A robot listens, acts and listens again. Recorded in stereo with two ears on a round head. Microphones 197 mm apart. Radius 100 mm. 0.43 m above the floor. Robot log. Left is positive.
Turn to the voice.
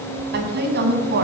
note: The woman speaking: about 50° right or 130° right.
cmd yaw -50
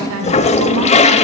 note: So it is at 75° right.
cmd yaw -75
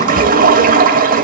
cmd idle
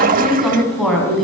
end: Facing the woman speaking, 2 to 4 m away.